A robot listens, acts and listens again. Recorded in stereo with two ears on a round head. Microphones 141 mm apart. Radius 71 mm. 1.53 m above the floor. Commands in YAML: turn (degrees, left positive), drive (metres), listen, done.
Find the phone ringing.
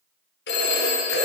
turn: 75
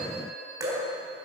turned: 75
listen: true
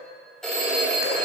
done: "Facing the phone ringing."